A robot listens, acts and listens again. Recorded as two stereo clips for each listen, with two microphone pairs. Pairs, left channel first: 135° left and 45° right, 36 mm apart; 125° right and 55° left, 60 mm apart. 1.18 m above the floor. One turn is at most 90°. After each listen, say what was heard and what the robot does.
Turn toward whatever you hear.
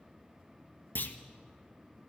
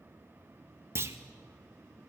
The clunk: 105° left. Turn 90° left.
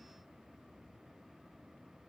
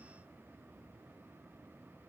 Nothing new. It was at 15° left. Turn 15° left.
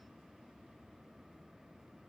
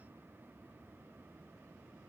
I heard a clunk from this way, but can't make it out now.